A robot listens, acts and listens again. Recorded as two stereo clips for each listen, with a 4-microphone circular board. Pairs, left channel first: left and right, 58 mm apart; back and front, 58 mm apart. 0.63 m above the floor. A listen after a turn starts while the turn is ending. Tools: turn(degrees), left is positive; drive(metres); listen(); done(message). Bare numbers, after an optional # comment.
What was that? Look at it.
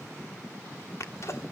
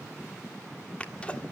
# The sneeze: 115° left.
turn(115)
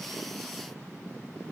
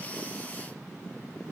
done("Facing where the sneeze came from. I can't hear it now.")